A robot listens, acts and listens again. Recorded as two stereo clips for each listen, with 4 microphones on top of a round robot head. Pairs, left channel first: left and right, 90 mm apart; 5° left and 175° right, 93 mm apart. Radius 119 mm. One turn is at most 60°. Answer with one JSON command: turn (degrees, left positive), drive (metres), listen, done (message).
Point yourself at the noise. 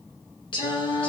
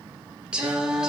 {"turn": 60}
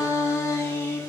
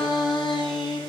{"turn": 30}
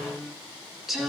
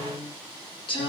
{"done": "Found it: singing, straight ahead, 2 to 4 m away."}